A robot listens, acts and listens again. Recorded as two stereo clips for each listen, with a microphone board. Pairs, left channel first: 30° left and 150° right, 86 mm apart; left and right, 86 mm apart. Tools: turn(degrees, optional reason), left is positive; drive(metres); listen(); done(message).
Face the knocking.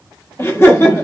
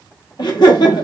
listen()
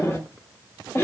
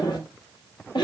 listen()
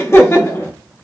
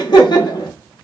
done("I can't make out knocking to turn to.")